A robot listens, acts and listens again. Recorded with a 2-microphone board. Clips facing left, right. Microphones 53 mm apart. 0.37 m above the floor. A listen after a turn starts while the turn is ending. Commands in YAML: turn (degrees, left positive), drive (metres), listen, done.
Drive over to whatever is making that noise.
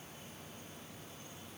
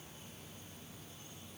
listen: true
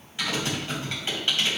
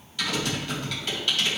turn: 25
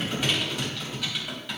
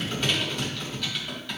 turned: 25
turn: 10
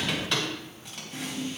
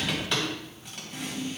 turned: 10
drive: 1.0
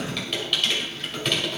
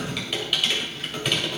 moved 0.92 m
turn: -10
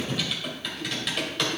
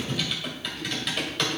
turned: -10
drive: 1.0
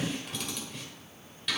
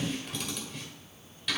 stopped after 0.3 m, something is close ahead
done: "I am next to the typing on a keyboard."